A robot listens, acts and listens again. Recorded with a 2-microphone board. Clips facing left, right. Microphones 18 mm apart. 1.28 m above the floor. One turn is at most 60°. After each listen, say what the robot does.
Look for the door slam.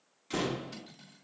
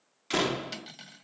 Turn 40° right.
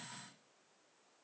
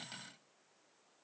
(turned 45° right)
Keep listening.
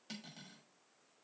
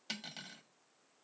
I heard a door slam, but can't make it out now. It was about 5° left or 95° right.